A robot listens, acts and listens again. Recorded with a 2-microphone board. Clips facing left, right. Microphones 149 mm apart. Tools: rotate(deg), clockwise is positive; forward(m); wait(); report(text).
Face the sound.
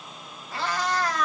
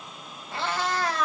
rotate(30)
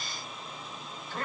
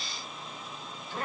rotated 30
rotate(15)
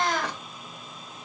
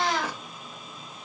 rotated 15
rotate(10)
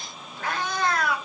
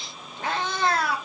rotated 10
rotate(35)
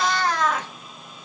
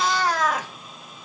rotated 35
rotate(10)
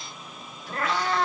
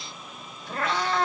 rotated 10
report("Found it: a cat meowing, straight ahead, 2 to 4 m away.")